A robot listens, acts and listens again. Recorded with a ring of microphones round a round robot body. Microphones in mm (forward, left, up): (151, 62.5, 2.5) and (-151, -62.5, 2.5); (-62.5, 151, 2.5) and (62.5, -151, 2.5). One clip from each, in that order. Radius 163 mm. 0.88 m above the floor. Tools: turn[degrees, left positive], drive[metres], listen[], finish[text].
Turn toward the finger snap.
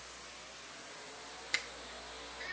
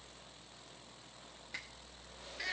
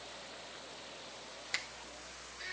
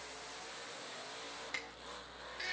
Thought: The finger snap: 50° left.
Action: turn[50]
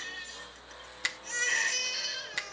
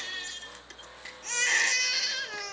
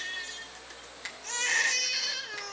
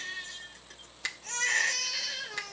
Action: finish[Facing the finger snap, under 1 m away.]